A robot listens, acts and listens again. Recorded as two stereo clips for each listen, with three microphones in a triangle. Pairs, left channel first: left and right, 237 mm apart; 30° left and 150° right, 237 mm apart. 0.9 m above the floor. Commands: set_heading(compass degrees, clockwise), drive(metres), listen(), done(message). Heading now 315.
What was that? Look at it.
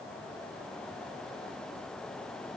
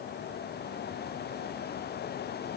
listen()
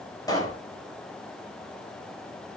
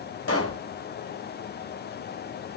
set_heading(300)
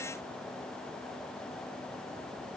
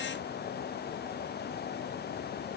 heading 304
done("Facing where the pop came from. I can't hear it now.")